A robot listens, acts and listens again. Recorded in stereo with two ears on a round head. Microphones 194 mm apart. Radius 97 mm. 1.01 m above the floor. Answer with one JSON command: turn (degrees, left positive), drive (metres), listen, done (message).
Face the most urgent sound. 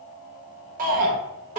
{"turn": -40}
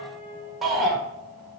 {"done": "Facing the shout, 1 to 2 m away."}